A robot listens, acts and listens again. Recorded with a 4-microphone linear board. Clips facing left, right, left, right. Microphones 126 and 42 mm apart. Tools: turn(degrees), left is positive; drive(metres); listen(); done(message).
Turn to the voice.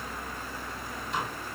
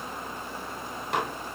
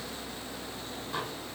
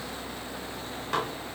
listen()
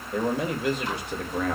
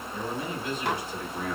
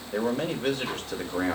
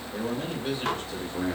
turn(degrees=65)
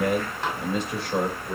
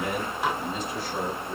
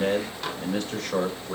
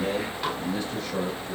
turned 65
turn(degrees=75)
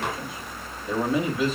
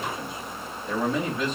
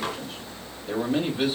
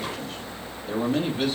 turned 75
done("Found it: a man speaking, straight ahead.")